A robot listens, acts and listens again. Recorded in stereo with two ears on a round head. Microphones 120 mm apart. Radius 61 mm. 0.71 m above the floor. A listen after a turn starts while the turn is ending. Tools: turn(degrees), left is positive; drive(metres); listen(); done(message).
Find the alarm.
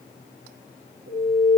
turn(degrees=-70)
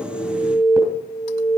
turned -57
turn(degrees=-15)
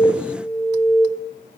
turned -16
done("Facing the alarm, 2 to 4 m away.")